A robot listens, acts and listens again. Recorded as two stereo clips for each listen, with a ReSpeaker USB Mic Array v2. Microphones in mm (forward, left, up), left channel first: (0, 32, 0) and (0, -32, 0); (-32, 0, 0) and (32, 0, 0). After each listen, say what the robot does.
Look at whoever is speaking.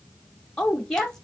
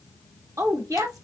Turn 10° left.
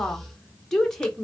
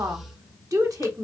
Found it: a woman speaking, straight ahead, under 1 m away.